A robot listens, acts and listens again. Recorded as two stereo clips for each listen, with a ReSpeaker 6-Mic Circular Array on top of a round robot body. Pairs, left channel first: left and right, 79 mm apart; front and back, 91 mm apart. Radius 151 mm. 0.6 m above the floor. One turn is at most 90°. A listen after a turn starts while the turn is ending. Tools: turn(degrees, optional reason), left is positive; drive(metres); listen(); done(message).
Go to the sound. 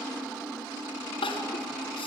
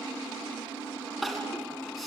turn(degrees=90, reason="The crying: 90° left.")
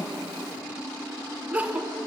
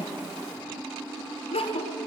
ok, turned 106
turn(degrees=-15, reason="The crying is now 15° right.")
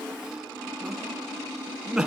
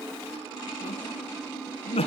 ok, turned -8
drive(metres=1.0)
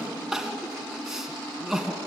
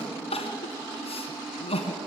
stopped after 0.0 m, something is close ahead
done("Something is in my way. I am facing the crying but have not reached it.")